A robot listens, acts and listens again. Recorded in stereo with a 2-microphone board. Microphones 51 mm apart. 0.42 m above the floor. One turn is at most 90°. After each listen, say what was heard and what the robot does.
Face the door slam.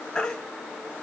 Keep listening.
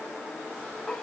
Keep listening.
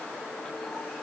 I can't make out a door slam to turn to.